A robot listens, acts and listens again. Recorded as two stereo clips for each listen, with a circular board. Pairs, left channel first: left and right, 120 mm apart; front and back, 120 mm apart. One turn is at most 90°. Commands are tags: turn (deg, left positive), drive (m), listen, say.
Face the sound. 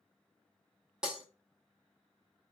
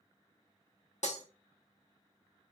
<turn deg="-10"/>
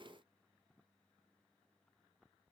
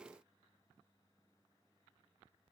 <say>I heard breaking glass from this way, but can't make it out now.</say>